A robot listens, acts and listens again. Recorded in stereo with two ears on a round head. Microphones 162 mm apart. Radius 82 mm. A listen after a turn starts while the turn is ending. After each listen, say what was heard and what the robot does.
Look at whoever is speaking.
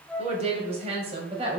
The woman speaking: about 35° right or 145° right. Turn 35° right.
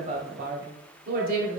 So it is at 125° right. Turn 125° right.
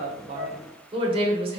The woman speaking is now 35° right. Turn 35° right.
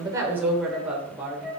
The woman speaking is now 10° right. Turn 10° right.
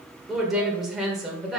Found it: a woman speaking, straight ahead, 1 to 2 m away.